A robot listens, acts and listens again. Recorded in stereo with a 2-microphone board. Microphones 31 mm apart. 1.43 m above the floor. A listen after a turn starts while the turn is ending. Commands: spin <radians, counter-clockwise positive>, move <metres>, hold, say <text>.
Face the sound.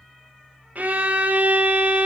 spin -1.13
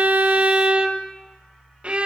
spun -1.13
spin -0.70
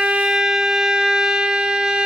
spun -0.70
spin -0.44
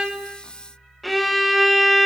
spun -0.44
say Facing the violin, under 1 m away.